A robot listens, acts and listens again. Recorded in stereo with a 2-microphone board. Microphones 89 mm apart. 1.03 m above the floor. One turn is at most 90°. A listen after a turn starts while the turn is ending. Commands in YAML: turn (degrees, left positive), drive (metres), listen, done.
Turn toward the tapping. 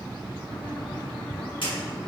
turn: 70
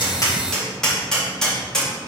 done: "Found it: tapping, straight ahead, 2 to 4 m away."